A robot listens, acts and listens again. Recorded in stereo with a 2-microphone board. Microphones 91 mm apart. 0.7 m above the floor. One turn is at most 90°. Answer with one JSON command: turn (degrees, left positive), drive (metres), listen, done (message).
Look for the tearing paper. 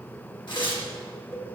{"turn": 55}
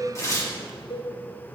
{"turn": 45}
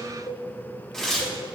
{"done": "Found it: tearing paper, straight ahead, 1 to 2 m away."}